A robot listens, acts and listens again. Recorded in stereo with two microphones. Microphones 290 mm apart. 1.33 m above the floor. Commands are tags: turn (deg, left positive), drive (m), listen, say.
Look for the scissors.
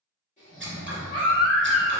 <turn deg="-40"/>
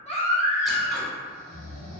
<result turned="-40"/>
<listen/>
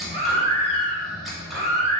<say>Facing the scissors.</say>